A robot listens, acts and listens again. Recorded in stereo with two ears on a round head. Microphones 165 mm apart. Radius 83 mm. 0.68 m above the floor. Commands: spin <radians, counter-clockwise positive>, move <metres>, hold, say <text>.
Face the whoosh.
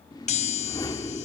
spin 0.35
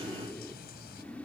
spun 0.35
spin 0.17
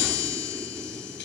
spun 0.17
hold
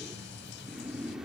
say Found it: a whoosh, straight ahead.